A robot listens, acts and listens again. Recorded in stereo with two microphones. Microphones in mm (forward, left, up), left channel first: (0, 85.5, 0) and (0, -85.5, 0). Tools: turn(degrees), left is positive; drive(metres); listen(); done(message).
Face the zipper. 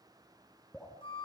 listen()
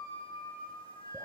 listen()
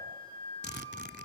turn(degrees=90)
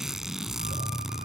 done("Facing the zipper, under 1 m away.")